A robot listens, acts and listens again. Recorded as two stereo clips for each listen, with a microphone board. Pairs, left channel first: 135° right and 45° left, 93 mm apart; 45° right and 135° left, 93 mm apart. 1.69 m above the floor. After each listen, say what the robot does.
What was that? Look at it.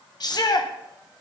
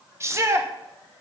Turn 170° right.
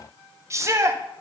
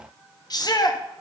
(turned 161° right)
Turn 10° right.
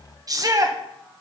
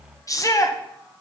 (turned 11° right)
Facing the shout.